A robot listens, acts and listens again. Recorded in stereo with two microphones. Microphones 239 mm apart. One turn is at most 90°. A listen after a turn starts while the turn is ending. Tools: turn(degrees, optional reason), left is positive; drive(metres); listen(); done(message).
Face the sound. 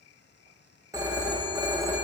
turn(degrees=-30)
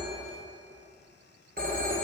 turn(degrees=-90, reason="So it is at 135° right.")
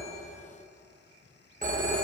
turn(degrees=-40, reason="The phone ringing is now 40° right.")
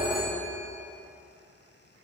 turn(degrees=20, reason="The phone ringing is now 20° left.")
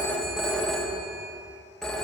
done("Facing the phone ringing.")